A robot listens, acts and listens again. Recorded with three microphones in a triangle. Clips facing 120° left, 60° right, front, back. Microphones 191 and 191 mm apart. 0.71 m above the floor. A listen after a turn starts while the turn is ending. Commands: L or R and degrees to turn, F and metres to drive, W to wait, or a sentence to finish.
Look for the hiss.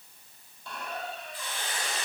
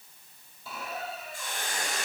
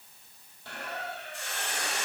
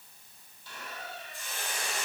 R15
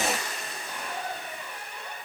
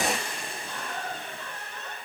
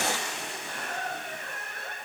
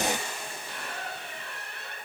Found it: a hiss, straight ahead.